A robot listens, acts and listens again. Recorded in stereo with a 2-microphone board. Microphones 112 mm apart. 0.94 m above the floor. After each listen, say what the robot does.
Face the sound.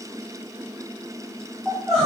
Turn 30° left.
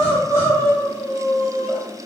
Turn 30° right.
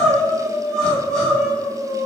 Found it: crying, straight ahead, 1 to 2 m away.